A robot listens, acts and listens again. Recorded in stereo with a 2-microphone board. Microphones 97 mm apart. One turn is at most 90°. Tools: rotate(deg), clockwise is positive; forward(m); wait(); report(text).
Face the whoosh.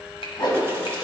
rotate(-50)
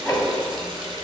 report("Found it: a whoosh, straight ahead.")